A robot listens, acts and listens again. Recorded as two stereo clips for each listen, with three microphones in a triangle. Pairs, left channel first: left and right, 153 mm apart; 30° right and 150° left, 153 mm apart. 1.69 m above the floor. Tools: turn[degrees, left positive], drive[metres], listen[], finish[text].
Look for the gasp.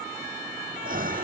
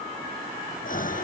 Thought: The gasp: 60° right.
Action: turn[-60]
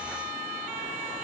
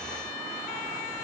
Action: finish[I heard a gasp from this way, but can't make it out now.]